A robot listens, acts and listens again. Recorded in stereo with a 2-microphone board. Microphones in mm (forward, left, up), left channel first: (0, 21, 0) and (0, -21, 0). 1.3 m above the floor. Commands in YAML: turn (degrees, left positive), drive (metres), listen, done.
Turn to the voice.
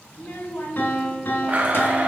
turn: 55
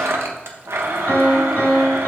listen: true
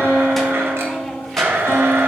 listen: true
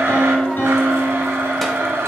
done: "I heard a child speaking, but can't make it out now. It was about straight ahead or 70° left."